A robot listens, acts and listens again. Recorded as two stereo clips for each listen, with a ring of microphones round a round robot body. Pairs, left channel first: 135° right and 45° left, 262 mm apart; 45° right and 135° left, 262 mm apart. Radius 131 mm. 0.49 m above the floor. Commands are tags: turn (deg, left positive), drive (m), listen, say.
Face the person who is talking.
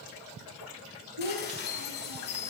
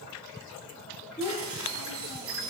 <turn deg="45"/>
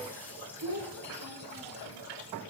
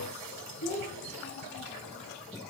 <turn deg="10"/>
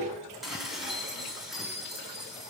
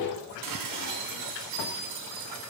<listen/>
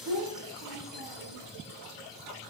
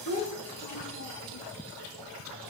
<say>Found it: a child speaking, straight ahead, over 4 m away.</say>